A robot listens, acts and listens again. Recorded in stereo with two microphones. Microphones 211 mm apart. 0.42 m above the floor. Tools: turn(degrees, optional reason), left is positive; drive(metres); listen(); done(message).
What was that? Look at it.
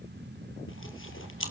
turn(degrees=90)
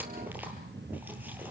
listen()
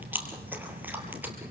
turn(degrees=-10, reason="The chewing is now 10° right.")
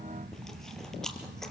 done("Found it: chewing, straight ahead, 2 to 4 m away.")